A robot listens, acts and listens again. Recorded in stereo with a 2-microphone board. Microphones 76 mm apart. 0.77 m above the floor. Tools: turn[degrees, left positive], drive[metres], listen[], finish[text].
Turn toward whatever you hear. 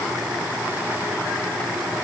Action: listen[]
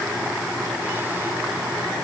Action: listen[]
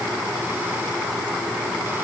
Action: finish[I can't make out anything to turn to.]